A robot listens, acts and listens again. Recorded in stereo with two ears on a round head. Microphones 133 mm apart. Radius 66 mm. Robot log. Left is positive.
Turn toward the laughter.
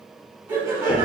note: The laughter: about 25° right or 155° right.
cmd yaw -25
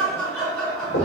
end: Found it: laughter, straight ahead, 1 to 2 m away.